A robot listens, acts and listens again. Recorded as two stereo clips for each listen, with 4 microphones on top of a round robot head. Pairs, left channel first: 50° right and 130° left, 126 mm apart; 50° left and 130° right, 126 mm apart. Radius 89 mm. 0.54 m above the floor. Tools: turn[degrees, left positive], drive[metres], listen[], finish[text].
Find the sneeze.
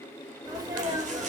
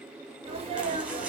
Thought: The sneeze: 170° right.
Action: turn[-170]
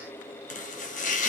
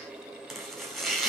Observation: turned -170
Action: finish[I heard a sneeze from this way, but can't make it out now.]